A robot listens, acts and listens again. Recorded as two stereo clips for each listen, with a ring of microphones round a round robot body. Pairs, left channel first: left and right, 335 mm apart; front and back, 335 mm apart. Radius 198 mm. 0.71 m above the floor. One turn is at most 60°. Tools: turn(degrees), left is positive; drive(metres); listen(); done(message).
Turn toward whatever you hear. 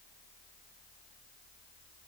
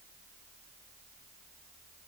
listen()
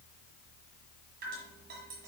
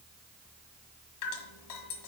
turn(degrees=-25)
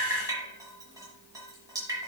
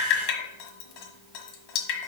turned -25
turn(degrees=-10)
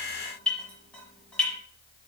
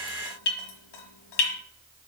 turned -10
done("Facing the dripping.")